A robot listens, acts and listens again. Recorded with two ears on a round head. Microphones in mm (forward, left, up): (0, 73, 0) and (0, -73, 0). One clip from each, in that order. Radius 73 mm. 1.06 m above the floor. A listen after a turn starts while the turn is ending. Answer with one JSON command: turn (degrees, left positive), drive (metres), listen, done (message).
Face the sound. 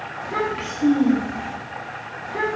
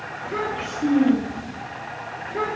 {"turn": 55}
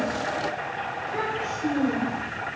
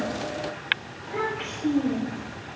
{"done": "Found it: a child speaking, straight ahead."}